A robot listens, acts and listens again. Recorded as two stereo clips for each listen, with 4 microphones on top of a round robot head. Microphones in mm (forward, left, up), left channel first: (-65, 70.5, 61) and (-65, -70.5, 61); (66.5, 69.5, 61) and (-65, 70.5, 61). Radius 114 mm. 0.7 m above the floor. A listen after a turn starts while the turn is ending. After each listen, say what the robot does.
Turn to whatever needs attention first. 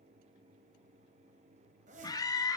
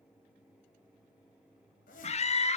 Turn 30° left.
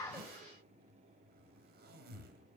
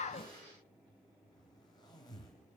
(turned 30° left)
Keep listening.
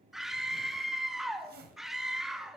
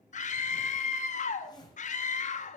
Facing the scream.